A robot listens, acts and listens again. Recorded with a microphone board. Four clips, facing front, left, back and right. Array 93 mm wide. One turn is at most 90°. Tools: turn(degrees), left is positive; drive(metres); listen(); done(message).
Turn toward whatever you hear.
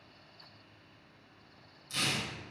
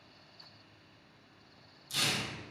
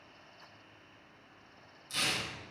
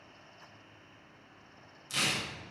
turn(degrees=-90)
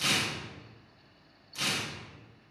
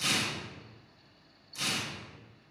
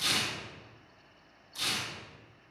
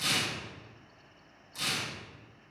turn(degrees=10)
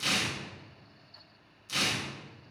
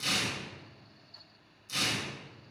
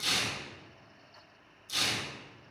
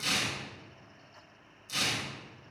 done("Facing the tearing paper.")